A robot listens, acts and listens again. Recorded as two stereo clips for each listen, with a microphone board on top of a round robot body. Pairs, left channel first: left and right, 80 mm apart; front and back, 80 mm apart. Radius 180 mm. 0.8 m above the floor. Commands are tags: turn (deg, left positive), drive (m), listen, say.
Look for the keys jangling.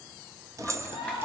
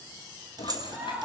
<turn deg="-145"/>
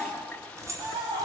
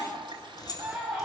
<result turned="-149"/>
<turn deg="-40"/>
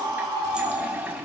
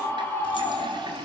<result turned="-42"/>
<listen/>
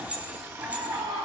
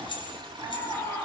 <turn deg="-15"/>
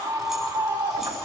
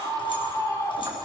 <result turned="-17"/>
<listen/>
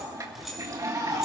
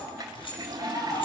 <say>Found it: keys jangling, straight ahead.</say>